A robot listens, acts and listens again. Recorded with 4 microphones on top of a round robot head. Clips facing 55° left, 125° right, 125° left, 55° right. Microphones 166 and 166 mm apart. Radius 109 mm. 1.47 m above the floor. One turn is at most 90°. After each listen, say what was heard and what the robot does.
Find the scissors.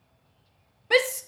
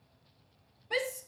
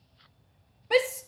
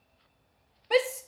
Keep listening.
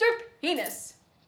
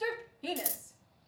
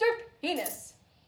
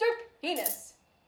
The scissors: 105° right. Turn 90° right.
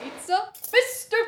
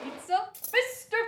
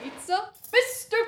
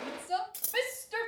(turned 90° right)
The scissors is now 40° right. Turn 40° right.
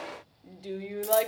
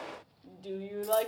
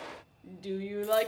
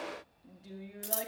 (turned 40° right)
Keep listening.
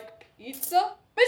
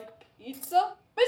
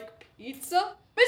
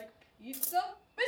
The scissors is now 10° right. Turn 10° right.
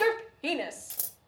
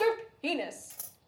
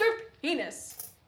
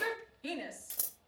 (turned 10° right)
Facing the scissors, 1 to 2 m away.